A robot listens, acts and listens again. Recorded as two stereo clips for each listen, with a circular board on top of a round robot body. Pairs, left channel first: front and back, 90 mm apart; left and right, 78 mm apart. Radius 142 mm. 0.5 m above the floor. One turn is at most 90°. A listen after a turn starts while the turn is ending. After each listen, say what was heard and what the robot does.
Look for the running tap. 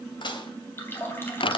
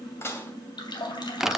The running tap: 65° left. Turn 65° left.
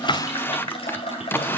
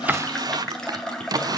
The running tap is now 10° left. Turn 10° left.
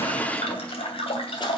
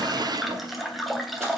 Facing the running tap.